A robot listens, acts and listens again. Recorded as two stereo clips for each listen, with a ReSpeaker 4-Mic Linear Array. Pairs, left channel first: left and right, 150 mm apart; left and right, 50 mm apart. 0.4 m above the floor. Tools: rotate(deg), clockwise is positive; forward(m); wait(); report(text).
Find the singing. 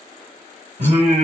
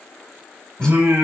rotate(60)
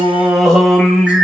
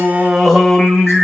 report("Facing the singing.")